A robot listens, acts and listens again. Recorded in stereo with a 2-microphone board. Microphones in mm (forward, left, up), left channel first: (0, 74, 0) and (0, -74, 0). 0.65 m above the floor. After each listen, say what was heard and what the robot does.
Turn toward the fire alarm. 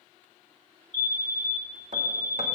The fire alarm: about 50° left or 130° left. Turn 50° left.
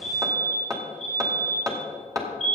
So it is at 70° left. Turn 70° left.
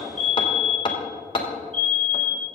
Found it: a fire alarm, straight ahead.